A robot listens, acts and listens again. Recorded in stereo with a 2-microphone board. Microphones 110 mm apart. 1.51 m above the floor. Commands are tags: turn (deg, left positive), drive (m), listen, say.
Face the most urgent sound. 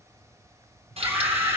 <turn deg="-25"/>
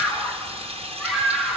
<say>Found it: a scream, straight ahead, over 4 m away.</say>